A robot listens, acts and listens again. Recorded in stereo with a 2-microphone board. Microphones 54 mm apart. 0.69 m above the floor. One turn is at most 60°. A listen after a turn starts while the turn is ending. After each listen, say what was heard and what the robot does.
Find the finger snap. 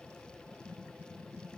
Keep listening.
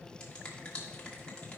The finger snap: about 20° left or 160° left. Turn 20° left.
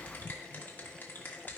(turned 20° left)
So it is at 140° left. Turn 60° left.
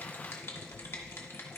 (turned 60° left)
The finger snap is now 110° left. Turn 60° left.
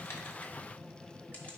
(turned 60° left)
Nothing new. It was at 50° left. Turn 50° left.
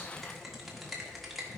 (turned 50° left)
Found it: a finger snap, straight ahead.